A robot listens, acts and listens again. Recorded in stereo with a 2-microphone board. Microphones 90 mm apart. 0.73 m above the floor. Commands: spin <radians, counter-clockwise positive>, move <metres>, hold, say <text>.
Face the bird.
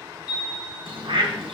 spin -1.31
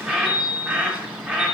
spin -0.26
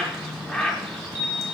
say Facing the bird.